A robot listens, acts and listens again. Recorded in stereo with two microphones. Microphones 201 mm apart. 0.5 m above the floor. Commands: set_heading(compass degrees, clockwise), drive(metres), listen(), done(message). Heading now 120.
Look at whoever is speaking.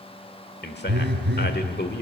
set_heading(60)
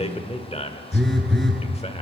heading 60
set_heading(20)
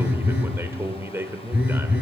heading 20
set_heading(35)
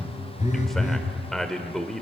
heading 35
done("Facing the man speaking.")